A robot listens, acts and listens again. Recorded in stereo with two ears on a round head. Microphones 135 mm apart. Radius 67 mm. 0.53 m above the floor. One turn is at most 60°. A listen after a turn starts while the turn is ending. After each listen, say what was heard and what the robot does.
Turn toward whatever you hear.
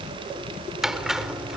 Turn 30° right.
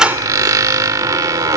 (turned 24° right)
So it is at 155° right. Turn 60° right.
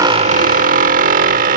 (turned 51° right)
The squeak is now 100° right. Turn 60° right.
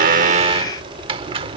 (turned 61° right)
The squeak is now 45° right. Turn 45° right.
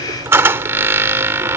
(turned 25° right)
The squeak is now 20° right. Turn 20° right.
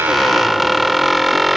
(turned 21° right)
Facing the squeak.